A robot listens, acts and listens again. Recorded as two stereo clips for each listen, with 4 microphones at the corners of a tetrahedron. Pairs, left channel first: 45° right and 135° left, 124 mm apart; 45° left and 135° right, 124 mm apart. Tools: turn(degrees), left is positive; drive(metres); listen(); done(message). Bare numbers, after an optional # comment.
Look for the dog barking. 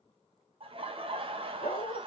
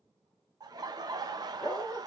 # The dog barking: 40° right.
turn(-40)
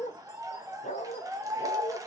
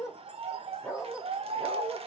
# The dog barking is now 55° right.
turn(-55)
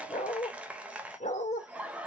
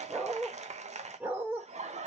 # The dog barking is now 60° right.
turn(-60)
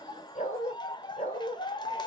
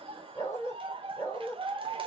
# The dog barking is now 20° right.
turn(-20)
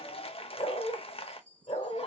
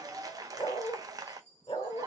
done("Facing the dog barking.")